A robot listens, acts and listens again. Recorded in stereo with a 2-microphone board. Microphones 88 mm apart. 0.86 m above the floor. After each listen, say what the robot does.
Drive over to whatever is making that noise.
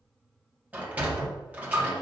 Turn 15° right.
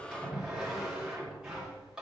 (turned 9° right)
Turn 30° right.
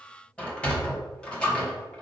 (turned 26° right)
Turn 15° left.
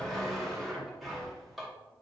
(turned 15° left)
Drive 1.0 m forward.
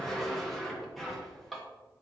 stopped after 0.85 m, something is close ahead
Arrived at the sliding door, straight ahead.